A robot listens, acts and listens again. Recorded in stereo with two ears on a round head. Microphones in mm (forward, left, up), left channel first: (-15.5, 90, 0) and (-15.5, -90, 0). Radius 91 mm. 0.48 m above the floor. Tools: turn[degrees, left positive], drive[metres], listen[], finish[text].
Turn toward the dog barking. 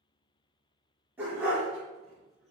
Action: turn[-30]
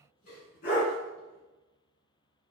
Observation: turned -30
Thought: So it is at 50° left.
Action: turn[50]
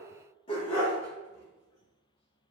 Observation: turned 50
Thought: The dog barking is now 30° left.
Action: turn[30]
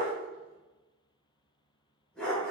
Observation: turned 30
Action: finish[Facing the dog barking, 1 to 2 m away.]